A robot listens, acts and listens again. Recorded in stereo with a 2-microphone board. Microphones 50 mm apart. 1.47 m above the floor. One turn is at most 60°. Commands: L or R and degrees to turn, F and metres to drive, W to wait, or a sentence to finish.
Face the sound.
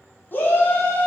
L40
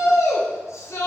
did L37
L60
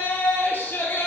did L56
L45
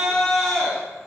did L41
Found it: a shout, straight ahead.